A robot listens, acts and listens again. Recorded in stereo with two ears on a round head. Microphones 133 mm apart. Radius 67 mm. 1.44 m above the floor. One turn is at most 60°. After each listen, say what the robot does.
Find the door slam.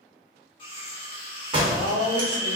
Turn 35° right.
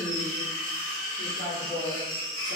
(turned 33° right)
Keep listening.
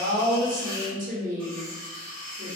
I heard a door slam, but can't make it out now. It was about straight ahead or 115° right.